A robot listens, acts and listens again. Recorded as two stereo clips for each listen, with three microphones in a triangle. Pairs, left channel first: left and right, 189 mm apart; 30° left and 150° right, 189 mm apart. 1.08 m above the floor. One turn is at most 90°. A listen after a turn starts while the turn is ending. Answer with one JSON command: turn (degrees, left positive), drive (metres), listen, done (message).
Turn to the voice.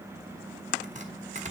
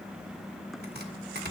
{"listen": true}
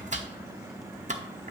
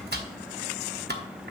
{"listen": true}
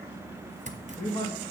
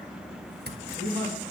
{"turn": 90}
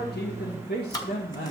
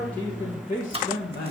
{"turn": 60}
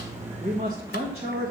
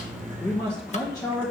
{"turn": -40}
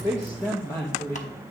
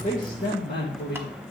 {"turn": 20}
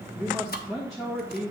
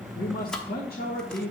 {"done": "Facing the man speaking."}